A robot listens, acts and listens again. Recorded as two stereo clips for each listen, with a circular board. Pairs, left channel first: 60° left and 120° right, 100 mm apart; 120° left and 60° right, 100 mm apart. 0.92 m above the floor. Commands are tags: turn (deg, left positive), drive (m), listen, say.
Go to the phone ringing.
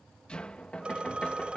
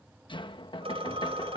<turn deg="-40"/>
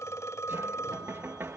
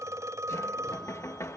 <drive m="1.0"/>
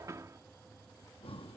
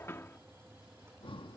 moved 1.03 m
<listen/>
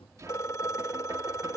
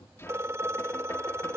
<drive m="1.0"/>
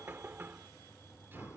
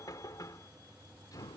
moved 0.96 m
<listen/>
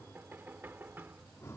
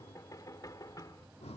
<listen/>
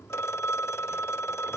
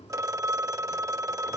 <drive m="1.0"/>
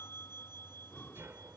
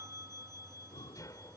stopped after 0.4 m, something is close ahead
<listen/>
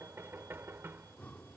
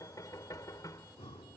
<listen/>
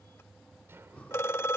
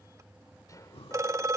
<say>Arrived at the phone ringing, straight ahead.</say>